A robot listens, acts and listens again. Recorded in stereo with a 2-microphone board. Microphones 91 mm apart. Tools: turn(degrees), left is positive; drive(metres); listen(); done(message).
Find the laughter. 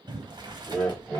turn(degrees=30)
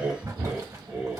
turn(degrees=-10)
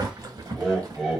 done("Found it: laughter, straight ahead.")